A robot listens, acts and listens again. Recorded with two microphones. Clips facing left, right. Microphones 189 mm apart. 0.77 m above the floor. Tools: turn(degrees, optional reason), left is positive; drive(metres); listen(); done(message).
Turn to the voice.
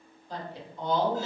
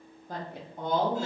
turn(degrees=-50, reason="The woman speaking: about 50° right or 130° right.")
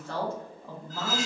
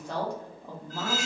turn(degrees=-15, reason="So it is at 15° right.")
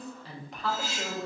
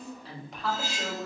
done("Found it: a woman speaking, straight ahead, under 1 m away.")